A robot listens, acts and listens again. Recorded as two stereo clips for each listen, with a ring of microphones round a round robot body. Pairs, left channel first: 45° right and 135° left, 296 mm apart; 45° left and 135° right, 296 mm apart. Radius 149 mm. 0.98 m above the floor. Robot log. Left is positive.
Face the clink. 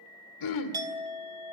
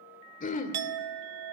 note: The clink: 145° right.
cmd yaw -145
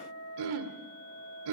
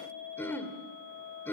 end: Found it: a clink, straight ahead.